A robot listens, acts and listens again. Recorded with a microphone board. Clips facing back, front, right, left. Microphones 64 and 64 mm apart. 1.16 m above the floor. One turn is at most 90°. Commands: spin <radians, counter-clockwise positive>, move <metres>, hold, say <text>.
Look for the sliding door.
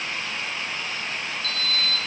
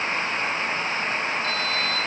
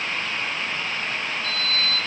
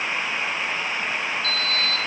spin 0.96
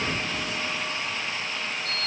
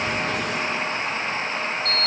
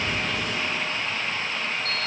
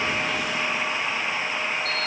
spin 0.17
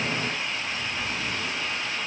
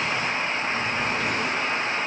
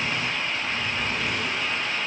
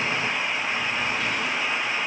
hold
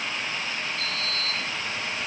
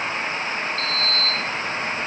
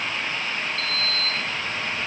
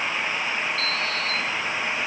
say Facing the sliding door, under 1 m away.